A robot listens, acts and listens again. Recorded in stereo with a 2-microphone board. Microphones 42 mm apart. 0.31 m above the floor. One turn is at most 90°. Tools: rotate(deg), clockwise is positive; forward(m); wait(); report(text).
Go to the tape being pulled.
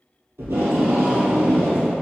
rotate(90)
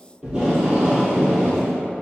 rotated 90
rotate(10)
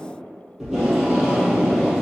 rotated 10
forward(1.0)
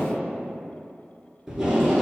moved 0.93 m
rotate(10)
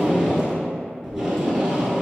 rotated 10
forward(1.0)
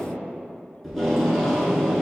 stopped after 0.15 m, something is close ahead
report("Arrived at the tape being pulled, straight ahead.")